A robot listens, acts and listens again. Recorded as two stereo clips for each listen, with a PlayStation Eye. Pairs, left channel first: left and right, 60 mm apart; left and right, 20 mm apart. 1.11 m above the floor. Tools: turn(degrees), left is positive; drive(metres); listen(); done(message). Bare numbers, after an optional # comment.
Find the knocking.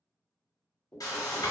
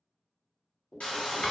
# The knocking: about 20° left or 160° left.
turn(20)
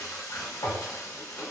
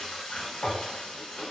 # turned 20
listen()
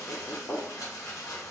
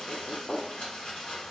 # So it is at 140° left.
turn(140)
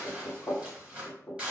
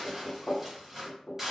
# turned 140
# The knocking is now 50° left.
turn(50)
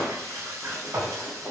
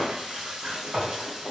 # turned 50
listen()
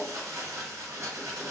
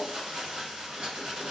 listen()
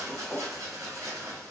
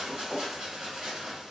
done("Facing the knocking, under 1 m away.")